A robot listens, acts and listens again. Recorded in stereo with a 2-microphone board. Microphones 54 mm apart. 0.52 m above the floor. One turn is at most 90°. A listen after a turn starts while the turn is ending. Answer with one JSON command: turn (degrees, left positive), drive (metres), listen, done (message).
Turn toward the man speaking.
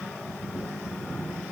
{"listen": true}
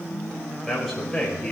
{"turn": 30}
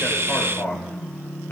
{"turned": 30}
{"turn": 90}
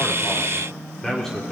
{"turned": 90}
{"done": "Found it: a man speaking, straight ahead."}